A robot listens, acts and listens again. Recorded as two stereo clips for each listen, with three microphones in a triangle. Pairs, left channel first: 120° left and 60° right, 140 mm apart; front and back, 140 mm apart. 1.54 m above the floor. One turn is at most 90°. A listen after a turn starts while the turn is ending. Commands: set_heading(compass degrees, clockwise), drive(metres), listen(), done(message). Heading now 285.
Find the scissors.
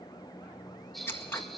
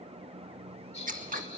set_heading(15)
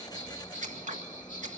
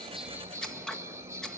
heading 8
set_heading(93)
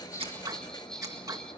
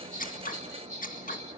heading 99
done("Facing the scissors.")